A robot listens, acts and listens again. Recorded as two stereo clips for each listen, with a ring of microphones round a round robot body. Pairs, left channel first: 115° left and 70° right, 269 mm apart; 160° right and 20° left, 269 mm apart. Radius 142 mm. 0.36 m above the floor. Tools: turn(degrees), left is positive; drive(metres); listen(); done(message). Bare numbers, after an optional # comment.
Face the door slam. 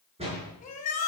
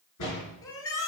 # The door slam: 135° right.
turn(-135)
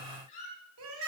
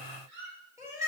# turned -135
done("I heard a door slam from this way, but can't make it out now.")